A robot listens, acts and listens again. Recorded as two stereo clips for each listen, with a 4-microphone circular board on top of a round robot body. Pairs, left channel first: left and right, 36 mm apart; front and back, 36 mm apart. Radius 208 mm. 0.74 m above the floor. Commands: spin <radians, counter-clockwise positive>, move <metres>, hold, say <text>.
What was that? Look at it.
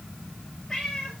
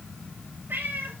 spin 2.79
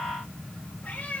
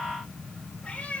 spin 0.79
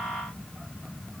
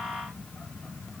hold
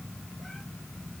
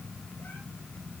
hold
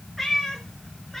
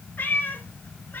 say Found it: a cat meowing, straight ahead.